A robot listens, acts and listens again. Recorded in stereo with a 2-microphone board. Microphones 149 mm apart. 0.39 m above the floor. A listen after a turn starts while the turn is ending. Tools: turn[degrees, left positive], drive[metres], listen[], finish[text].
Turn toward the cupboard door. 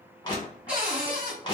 Action: turn[-30]
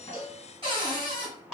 Thought: So it is at 140° right.
Action: turn[-140]
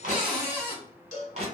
Thought: The cupboard door is now 15° right.
Action: turn[-15]
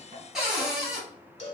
Action: finish[Found it: a cupboard door, straight ahead, 1 to 2 m away.]